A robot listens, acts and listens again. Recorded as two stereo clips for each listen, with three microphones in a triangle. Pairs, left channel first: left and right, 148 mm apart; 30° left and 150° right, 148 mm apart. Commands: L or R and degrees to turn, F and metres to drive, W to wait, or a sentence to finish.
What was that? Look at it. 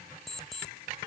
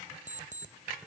L180
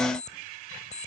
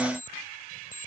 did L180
L50
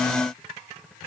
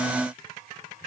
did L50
W
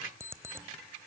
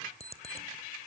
R20
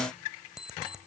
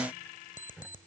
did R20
Found it: an alarm clock, straight ahead.